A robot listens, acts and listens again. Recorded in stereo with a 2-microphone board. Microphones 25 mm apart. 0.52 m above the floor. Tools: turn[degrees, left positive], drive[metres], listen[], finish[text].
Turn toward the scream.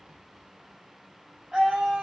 Action: turn[-30]
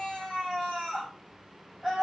Thought: So it is at 10° left.
Action: turn[10]
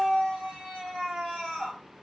Action: finish[Found it: a scream, straight ahead.]